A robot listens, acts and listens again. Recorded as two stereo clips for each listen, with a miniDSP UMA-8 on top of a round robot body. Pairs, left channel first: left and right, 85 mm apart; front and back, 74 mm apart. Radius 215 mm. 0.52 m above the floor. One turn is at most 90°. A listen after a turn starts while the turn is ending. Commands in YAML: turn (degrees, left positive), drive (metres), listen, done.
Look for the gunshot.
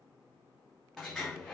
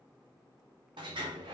listen: true
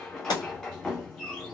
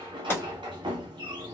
turn: 60
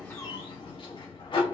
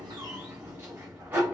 done: "Facing where the gunshot came from. I can't hear it now."